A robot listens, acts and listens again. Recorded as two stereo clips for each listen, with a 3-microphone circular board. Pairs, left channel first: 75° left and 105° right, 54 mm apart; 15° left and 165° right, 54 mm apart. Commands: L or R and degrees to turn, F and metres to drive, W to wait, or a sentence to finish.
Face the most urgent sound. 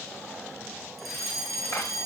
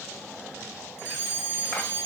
R15
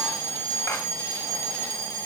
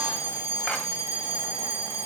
Found it: a fire alarm, straight ahead, over 4 m away.